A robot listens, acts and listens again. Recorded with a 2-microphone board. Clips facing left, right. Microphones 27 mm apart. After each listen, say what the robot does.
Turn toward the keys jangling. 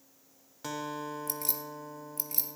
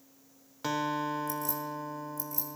Turn 65° left.
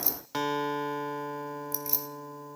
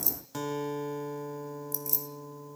Turn 35° left.
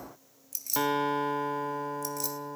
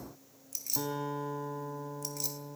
Facing the keys jangling.